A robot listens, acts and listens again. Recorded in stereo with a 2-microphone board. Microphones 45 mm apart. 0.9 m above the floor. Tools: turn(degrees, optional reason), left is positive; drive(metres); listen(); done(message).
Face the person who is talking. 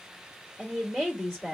turn(degrees=30)
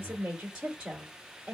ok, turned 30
turn(degrees=-20, reason="So it is at 20° right.")
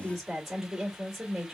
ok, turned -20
done("Facing the woman speaking, 2 to 4 m away.")